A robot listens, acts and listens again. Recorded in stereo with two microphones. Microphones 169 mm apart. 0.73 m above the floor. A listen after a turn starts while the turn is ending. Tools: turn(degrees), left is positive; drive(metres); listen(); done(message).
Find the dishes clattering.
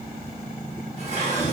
turn(degrees=-45)
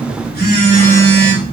listen()
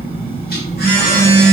listen()
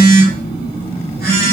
done("I heard dishes clattering, but can't make it out now. It was about straight ahead or 90° right.")